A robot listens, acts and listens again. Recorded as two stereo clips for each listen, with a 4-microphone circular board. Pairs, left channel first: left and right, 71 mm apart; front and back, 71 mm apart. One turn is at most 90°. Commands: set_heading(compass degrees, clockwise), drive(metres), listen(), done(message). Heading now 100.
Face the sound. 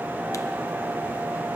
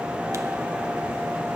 listen()
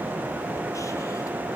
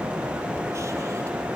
listen()
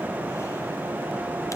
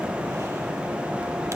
done("I can't make out anything.")